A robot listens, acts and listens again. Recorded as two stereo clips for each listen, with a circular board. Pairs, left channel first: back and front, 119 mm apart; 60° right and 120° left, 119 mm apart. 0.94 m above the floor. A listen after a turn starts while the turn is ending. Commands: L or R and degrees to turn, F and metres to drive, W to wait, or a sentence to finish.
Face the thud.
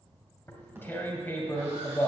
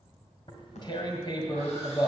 R70
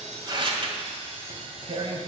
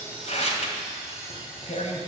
Facing where the thud came from. I can't hear it now.